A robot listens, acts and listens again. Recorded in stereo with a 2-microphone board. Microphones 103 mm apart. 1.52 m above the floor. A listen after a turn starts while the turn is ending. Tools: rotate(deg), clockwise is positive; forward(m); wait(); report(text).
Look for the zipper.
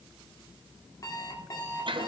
wait()
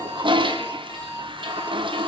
wait()
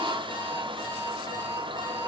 report("I can't make out a zipper to turn to.")